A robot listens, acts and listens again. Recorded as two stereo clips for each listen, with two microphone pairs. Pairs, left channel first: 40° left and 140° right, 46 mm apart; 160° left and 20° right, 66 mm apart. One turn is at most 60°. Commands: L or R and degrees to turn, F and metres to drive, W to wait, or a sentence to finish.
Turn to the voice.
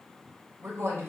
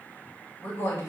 R60
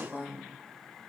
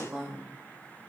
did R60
R60
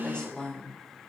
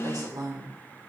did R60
R25
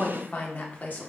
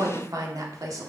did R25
Facing the woman speaking, 1 to 2 m away.